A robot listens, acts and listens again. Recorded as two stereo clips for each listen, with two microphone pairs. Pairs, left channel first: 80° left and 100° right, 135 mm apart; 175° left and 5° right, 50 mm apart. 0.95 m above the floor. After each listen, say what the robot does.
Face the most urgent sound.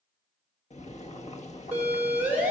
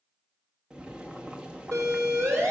Turn 20° right.
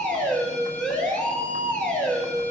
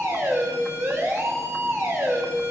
Found it: a siren, straight ahead.